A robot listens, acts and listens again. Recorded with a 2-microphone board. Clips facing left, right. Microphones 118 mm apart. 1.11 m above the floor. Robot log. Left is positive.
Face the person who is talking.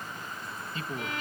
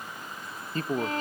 note: The man speaking: about 45° right or 135° right.
cmd yaw -45
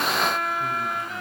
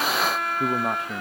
note: So it is at 95° right.
cmd yaw -95
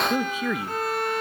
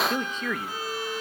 note: The man speaking is now 10° left.
cmd yaw +10
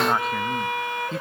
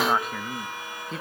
end: Facing the man speaking, 1 to 2 m away.